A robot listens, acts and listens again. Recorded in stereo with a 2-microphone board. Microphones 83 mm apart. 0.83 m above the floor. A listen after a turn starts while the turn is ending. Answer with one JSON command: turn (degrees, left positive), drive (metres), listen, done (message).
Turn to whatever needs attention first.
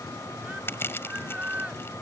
{"turn": -15}
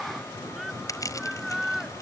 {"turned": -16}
{"done": "Found it: a shout, straight ahead."}